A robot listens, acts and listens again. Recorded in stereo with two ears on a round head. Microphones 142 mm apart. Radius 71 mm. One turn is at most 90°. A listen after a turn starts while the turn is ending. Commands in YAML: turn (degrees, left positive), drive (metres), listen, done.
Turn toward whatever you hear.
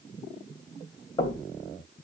turn: 25
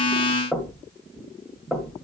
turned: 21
done: "Facing the knocking."